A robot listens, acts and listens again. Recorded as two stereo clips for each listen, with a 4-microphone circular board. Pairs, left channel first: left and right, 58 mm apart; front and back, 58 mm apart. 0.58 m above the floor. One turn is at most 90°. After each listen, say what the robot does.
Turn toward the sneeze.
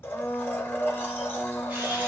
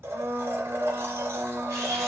Keep listening.
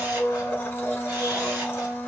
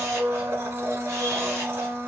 Keep listening.
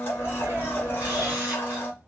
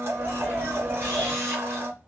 Turn 90° right.
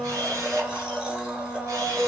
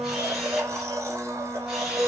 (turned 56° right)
Turn 65° right.
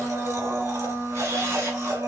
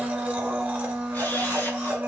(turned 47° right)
Turn 20° right.
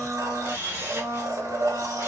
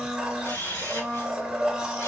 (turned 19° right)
I heard a sneeze from this way, but can't make it out now.